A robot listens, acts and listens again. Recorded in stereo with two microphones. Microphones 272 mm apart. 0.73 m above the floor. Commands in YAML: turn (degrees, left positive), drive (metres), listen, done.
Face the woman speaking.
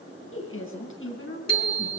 turn: 50
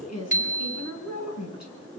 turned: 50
turn: 85
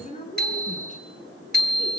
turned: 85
turn: 30
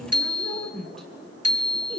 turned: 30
done: "Found it: a woman speaking, straight ahead."